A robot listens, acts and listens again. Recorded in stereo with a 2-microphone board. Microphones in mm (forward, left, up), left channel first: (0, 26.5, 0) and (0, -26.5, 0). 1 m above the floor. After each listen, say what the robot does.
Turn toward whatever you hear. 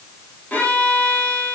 Turn 30° left.
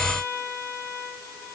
Turn 115° left.
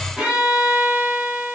Turn 15° right.
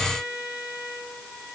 Facing the violin.